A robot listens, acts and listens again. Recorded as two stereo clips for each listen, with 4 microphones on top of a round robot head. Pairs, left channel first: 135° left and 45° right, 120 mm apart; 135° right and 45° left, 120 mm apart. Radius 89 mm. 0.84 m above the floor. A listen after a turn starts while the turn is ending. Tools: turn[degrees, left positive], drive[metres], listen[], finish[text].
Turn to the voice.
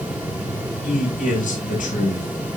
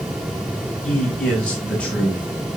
Thought: The man speaking: 145° left.
Action: turn[145]
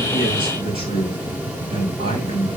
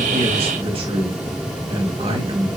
Action: finish[Facing the man speaking.]